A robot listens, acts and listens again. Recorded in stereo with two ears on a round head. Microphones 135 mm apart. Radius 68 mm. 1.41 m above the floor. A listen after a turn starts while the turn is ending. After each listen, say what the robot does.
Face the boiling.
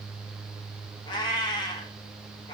Keep listening.
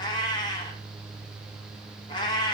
Keep listening.
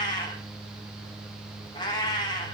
I can't make out boiling, only a cat meowing.